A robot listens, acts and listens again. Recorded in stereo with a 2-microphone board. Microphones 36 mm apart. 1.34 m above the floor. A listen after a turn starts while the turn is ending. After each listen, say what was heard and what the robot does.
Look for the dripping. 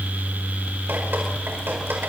Keep listening.
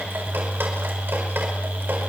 Keep listening.
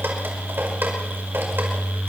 The dripping: about 70° right or 110° right. Turn 70° right.
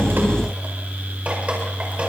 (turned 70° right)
Keep listening.
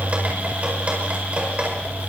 So it is at 35° right. Turn 35° right.
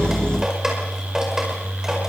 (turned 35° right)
The dripping is now 15° right. Turn 15° right.
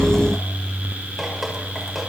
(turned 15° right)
Keep listening.
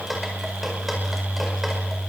Found it: dripping, straight ahead, over 4 m away.